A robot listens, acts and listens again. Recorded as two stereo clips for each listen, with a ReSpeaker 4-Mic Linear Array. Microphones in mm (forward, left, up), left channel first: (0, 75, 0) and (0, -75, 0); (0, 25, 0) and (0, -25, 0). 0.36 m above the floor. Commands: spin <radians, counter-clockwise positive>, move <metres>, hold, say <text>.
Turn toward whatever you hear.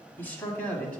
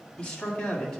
spin 0.52
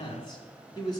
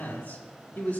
spin 2.62
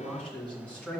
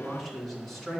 spin 0.17
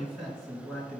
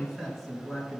say Found it: a man speaking, straight ahead, 2 to 4 m away.